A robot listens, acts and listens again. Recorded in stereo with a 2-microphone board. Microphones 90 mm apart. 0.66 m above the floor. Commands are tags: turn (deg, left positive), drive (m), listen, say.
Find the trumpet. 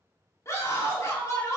<listen/>
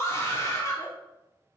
<listen/>
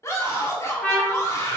<turn deg="30"/>
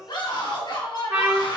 <turn deg="-15"/>
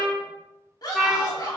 <say>Facing the trumpet.</say>